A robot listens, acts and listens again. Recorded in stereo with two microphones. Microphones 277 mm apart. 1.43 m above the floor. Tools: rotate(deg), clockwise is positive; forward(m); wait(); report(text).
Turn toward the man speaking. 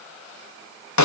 wait()
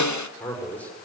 rotate(-30)
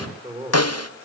rotate(25)
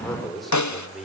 report("Found it: a man speaking, straight ahead.")